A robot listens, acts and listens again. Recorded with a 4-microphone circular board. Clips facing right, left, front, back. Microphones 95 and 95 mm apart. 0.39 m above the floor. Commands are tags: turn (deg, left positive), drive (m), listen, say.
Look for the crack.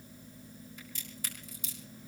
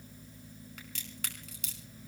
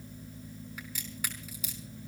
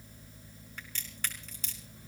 <turn deg="80"/>
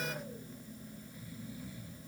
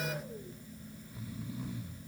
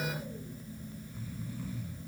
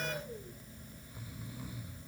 <say>Facing where the crack came from. I can't hear it now.</say>